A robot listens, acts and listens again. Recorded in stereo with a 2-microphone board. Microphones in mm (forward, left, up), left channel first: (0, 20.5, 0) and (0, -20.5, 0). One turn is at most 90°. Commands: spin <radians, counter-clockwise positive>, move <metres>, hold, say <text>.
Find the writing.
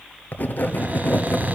spin 0.87
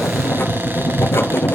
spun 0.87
spin 1.48
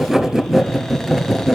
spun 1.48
spin -0.26
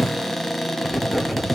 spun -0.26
say Found it: writing, straight ahead, 1 to 2 m away.